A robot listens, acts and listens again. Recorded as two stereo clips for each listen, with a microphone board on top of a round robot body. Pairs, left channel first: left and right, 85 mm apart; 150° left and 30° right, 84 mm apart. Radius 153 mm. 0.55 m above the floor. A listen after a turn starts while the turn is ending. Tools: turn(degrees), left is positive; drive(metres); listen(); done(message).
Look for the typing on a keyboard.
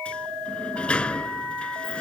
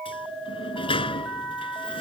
listen()
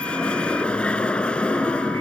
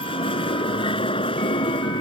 listen()
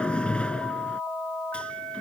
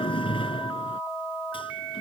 done("I can't make out typing on a keyboard, only a sliding door.")